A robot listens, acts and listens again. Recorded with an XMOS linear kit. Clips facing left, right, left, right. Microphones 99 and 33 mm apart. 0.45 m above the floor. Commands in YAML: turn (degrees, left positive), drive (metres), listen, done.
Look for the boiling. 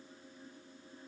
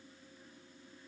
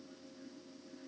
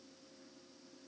listen: true
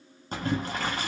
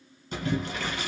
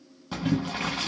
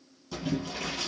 turn: 40
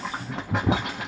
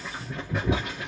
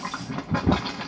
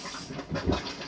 turn: 100
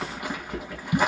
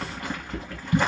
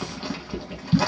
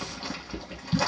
turn: 10
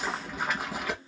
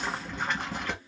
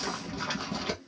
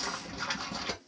done: "Found it: boiling, straight ahead."